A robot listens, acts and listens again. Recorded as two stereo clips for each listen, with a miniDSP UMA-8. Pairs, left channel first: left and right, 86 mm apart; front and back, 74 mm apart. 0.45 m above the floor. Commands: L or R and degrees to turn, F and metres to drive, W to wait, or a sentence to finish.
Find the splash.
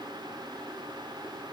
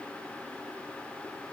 W
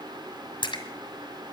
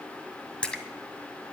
L75
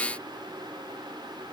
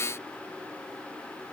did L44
L35
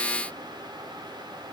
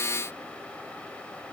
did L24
L10
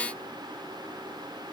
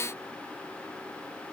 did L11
I heard a splash from this way, but can't make it out now.